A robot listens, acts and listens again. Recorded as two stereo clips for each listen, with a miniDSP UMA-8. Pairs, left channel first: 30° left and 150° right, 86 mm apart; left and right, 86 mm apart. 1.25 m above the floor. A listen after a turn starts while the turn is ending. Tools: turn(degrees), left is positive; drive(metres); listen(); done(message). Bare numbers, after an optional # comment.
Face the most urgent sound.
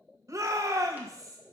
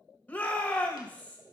# The shout: 160° left.
turn(160)
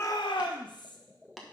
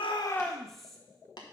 done("Facing the shout.")